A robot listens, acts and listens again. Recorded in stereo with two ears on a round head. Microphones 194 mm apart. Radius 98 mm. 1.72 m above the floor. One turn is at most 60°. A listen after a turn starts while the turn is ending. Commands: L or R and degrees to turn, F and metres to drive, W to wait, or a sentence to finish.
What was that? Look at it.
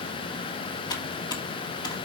L20
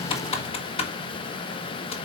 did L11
L30
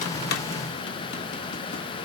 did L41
W
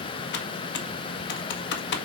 L60
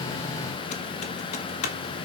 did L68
L40
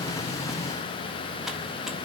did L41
W
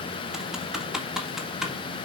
Found it: typing on a keyboard, straight ahead, 1 to 2 m away.